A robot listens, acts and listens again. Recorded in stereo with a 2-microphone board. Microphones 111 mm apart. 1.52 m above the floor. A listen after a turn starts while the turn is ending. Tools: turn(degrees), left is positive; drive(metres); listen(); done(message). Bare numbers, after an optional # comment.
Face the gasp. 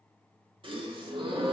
# The gasp: about 50° right or 130° right.
turn(-50)
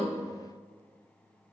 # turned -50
listen()
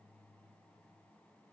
done("I heard a gasp, but can't make it out now. It was about straight ahead or 80° right.")